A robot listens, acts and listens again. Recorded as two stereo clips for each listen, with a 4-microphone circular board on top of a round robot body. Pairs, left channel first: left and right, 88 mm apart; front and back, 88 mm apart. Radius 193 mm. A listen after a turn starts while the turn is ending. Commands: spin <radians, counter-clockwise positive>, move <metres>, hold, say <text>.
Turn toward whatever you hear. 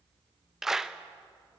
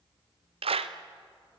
spin -3.05
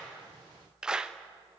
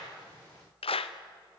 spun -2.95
spin -0.17
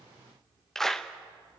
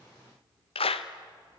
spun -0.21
say Facing the clap, under 1 m away.